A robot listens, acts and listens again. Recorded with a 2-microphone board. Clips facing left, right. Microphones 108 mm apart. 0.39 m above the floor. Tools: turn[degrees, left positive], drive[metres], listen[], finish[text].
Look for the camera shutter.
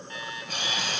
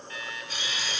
Thought: The camera shutter: about 55° left or 125° left.
Action: turn[55]
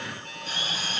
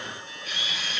Thought: So it is at 45° left.
Action: turn[45]
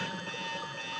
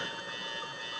Action: listen[]
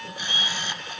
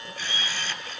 Thought: The camera shutter is now 25° left.
Action: turn[25]
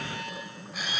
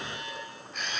Action: finish[Found it: a camera shutter, straight ahead.]